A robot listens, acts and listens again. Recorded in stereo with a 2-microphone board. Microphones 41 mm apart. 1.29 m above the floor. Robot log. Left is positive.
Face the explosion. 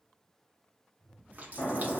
note: The explosion: about 60° left or 120° left.
cmd yaw +60
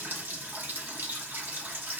cmd idle
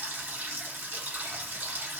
end: I heard an explosion, but can't make it out now. It was about straight ahead or 60° left.